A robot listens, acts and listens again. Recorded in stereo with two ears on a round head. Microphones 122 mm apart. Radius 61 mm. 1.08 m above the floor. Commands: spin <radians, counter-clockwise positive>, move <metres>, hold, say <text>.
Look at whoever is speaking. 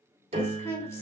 spin 0.35
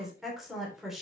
say Facing the woman speaking.